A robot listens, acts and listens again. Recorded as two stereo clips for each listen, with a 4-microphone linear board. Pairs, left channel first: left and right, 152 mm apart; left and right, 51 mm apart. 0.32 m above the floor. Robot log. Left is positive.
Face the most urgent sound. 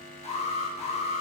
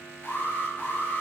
note: The alarm: about 45° left or 135° left.
cmd yaw +45
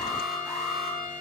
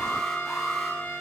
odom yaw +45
end: Facing the alarm, 2 to 4 m away.